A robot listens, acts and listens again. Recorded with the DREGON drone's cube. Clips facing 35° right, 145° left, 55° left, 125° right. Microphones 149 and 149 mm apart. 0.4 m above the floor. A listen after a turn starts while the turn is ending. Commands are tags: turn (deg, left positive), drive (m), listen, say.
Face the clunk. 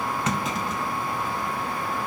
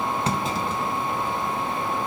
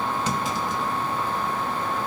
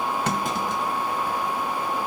<turn deg="-155"/>
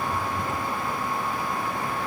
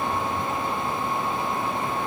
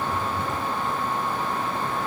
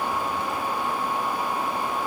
<say>Facing where the clunk came from. I can't hear it now.</say>